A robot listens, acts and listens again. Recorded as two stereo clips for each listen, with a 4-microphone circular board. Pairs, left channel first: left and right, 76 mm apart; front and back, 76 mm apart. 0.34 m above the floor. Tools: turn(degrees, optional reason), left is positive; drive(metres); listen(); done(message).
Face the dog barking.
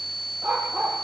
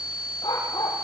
turn(degrees=-20, reason="The dog barking: 20° right.")
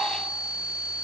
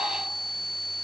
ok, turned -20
listen()
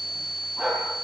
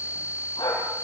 turn(degrees=-10, reason="The dog barking is now 10° right.")
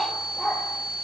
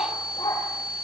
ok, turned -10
done("Facing the dog barking.")